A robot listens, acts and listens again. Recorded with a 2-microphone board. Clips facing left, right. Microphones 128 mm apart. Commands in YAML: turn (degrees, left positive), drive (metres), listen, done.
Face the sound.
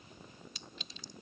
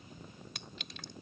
turn: -65
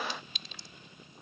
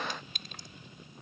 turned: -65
turn: -50
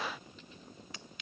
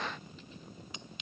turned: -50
turn: -20
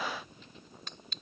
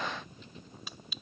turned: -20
done: "Facing the clink."